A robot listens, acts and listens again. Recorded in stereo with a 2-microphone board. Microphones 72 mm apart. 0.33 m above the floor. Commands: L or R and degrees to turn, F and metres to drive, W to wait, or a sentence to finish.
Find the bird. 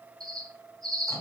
R70
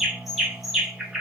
Facing the bird.